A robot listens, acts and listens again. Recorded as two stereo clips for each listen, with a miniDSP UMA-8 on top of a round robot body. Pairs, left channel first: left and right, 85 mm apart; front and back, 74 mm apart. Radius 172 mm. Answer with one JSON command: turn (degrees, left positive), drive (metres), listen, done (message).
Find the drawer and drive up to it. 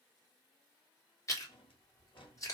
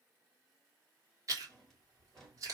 {"turn": 85}
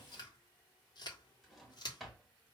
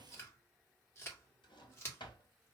{"drive": 1.0}
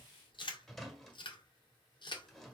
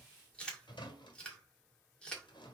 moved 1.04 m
{"drive": 1.0}
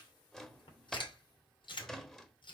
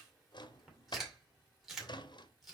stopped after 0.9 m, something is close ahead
{"done": "I am next to the drawer."}